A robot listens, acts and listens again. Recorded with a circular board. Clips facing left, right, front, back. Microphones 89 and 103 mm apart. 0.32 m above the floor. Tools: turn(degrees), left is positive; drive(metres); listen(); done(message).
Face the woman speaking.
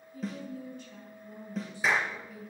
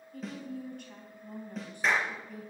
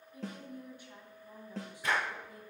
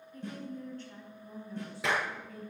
turn(degrees=-70)
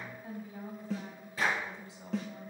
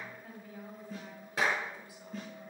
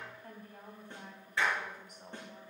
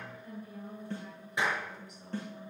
turn(degrees=35)
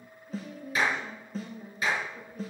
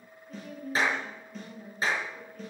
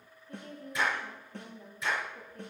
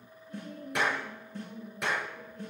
turn(degrees=10)
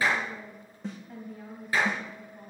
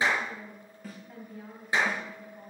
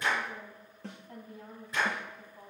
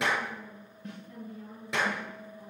done("Facing the woman speaking.")